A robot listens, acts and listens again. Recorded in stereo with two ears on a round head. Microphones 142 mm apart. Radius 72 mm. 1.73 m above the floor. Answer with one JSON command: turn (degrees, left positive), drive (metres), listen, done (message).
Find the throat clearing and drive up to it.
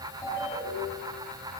{"listen": true}
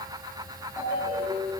{"listen": true}
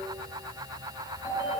{"done": "I can't make out throat clearing to turn to."}